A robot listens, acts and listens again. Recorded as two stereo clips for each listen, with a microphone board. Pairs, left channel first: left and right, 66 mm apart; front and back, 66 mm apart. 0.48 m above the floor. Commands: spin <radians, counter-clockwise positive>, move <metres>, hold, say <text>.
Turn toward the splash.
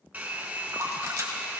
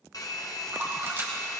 spin -2.18
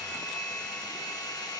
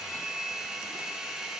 say Facing where the splash came from. I can't hear it now.